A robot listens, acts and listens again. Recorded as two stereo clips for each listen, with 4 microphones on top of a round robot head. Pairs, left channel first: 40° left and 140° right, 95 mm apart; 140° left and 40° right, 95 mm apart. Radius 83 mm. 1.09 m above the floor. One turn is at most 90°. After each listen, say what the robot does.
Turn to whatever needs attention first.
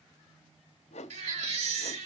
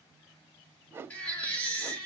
Turn 90° right.
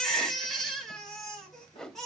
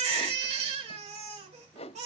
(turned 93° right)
Turn 50° right.
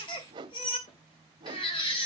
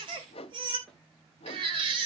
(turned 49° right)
Facing the baby crying.